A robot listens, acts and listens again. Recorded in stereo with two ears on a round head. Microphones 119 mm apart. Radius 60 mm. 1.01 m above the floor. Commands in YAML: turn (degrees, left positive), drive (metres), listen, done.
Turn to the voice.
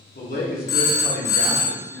turn: 90
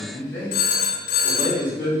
turn: 20
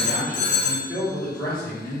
turn: 10
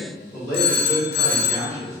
done: "Found it: a man speaking, straight ahead, 2 to 4 m away."